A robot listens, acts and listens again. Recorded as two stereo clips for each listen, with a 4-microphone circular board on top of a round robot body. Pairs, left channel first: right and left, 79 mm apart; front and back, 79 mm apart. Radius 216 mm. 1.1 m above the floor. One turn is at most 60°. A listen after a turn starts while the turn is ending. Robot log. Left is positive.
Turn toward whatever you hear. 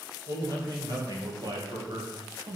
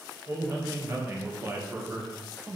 note: The man speaking: 105° left.
cmd yaw +60
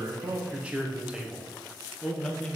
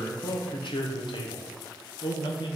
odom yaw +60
note: The man speaking is now 15° right.
cmd yaw -15
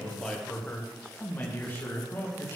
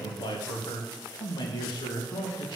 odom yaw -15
note: The man speaking is now 30° right.
cmd yaw -30
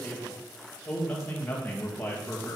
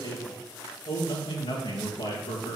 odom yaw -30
note: The man speaking is now 20° right.
cmd yaw -20
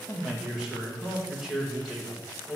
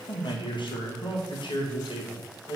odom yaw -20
end: Found it: a man speaking, straight ahead.